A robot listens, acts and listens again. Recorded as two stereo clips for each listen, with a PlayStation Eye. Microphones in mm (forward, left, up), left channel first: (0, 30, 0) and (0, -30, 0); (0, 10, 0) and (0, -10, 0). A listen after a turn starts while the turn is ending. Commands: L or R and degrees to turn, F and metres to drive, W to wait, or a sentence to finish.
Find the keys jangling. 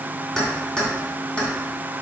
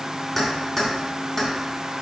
L20
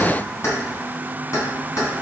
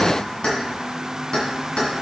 L120
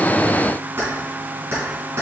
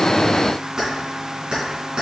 R50
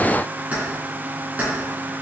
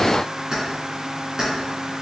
R25
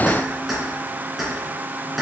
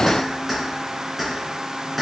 Found it: keys jangling, straight ahead, 2 to 4 m away.